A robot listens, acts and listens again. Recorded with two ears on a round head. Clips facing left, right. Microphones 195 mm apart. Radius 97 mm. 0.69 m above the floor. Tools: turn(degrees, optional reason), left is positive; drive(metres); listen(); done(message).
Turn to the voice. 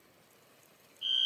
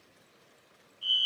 listen()
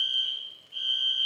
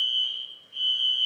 listen()
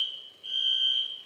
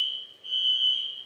done("I can't make out anyone speaking to turn to.")